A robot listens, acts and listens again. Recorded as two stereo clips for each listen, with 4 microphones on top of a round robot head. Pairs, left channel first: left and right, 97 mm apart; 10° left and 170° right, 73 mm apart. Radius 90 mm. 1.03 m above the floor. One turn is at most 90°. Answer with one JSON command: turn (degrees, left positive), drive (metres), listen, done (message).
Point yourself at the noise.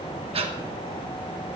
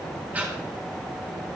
{"turn": -90}
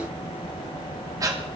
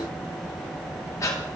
{"turn": -40}
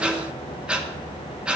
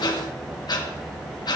{"turn": -10}
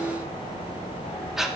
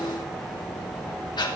{"done": "Facing the breathing, 2 to 4 m away."}